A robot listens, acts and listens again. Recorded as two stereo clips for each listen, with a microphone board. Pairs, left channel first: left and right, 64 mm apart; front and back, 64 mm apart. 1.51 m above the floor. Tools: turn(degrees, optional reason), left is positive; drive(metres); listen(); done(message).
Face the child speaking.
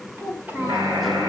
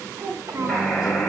turn(degrees=-150, reason="The child speaking: 150° right.")
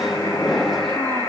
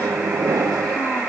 listen()
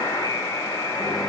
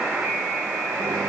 listen()
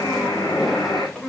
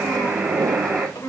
turn(degrees=10, reason="The child speaking is now 10° left.")
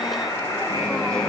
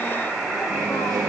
listen()
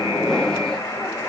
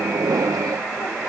listen()
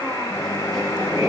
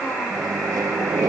done("Facing where the child speaking came from. I can't hear it now.")